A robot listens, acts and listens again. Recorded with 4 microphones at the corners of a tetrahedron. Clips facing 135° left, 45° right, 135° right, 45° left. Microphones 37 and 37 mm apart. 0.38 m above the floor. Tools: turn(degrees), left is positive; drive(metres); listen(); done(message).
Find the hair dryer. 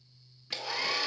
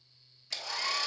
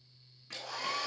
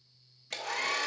turn(degrees=65)
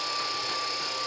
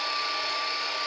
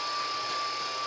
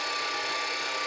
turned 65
turn(degrees=15)
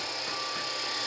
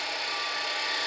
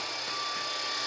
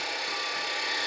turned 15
done("Facing the hair dryer, 1 to 2 m away.")